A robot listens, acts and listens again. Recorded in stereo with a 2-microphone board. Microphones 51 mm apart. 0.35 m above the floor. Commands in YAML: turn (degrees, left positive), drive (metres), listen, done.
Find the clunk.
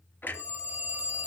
turn: 40
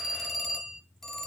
listen: true
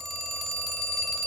done: "I heard a clunk, but can't make it out now. It was about straight ahead or 100° left."